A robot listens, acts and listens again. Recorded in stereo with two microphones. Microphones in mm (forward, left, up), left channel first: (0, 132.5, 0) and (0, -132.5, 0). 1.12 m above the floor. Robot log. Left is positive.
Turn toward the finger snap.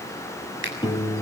note: The finger snap: about 45° right or 135° right.
cmd yaw -45
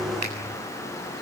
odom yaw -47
cmd idle
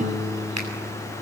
cmd idle
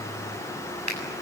note: So it is at 85° right.
cmd yaw -85
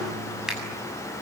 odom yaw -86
cmd idle
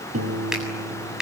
end: Facing the finger snap, over 4 m away.